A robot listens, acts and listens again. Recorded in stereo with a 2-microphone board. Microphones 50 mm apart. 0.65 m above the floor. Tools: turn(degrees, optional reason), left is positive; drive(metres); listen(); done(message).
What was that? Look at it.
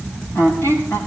turn(degrees=50, reason="The squeak: about 50° left or 130° left.")
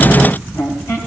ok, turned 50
turn(degrees=75, reason="So it is at 75° left.")
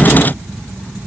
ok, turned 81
listen()
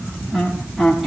done("Found it: a squeak, straight ahead, over 4 m away.")